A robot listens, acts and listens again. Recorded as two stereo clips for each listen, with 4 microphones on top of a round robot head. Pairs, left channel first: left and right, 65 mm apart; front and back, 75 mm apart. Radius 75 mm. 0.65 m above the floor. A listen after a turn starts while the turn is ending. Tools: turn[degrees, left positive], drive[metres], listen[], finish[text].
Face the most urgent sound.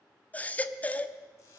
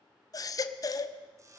Thought: The baby crying: 25° left.
Action: turn[25]
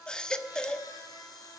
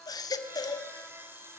Thought: The baby crying is now 15° left.
Action: turn[15]
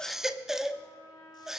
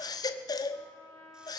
Action: finish[Found it: a baby crying, straight ahead.]